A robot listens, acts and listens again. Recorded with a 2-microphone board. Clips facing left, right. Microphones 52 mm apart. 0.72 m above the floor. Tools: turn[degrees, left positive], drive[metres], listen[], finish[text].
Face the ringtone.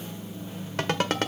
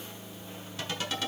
Thought: The ringtone: about 60° left or 120° left.
Action: turn[60]
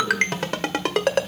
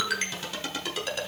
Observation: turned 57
Thought: So it is at 65° left.
Action: turn[65]
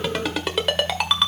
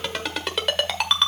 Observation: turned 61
Action: finish[Facing the ringtone.]